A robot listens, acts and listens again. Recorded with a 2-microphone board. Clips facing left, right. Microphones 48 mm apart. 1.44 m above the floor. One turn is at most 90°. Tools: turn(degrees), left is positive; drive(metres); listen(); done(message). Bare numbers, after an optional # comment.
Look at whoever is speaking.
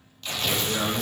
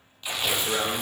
# The man speaking: about 70° right or 110° right.
turn(-70)
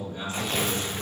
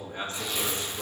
# So it is at 40° right.
turn(-40)
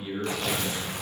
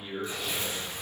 done("Found it: a man speaking, straight ahead.")